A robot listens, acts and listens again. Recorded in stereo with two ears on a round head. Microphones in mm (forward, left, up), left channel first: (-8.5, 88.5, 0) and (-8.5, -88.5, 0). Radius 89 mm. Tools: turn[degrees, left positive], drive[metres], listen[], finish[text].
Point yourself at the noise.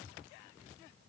Action: listen[]
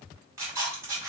Action: turn[-30]
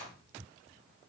Thought: So it is at 15° left.
Action: turn[15]
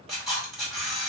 Action: finish[Found it: a camera shutter, straight ahead.]